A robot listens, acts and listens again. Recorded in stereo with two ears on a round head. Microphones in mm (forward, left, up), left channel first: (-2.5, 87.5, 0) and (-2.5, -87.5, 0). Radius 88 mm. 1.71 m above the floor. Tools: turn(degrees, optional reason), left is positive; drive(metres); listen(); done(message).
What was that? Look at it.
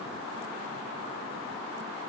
listen()
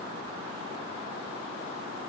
listen()
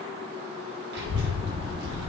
turn(degrees=-55, reason="The child speaking: about 55° right or 125° right.")
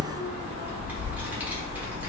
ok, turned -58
turn(degrees=-10, reason="So it is at 10° right.")
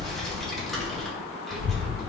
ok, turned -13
done("Facing the child speaking.")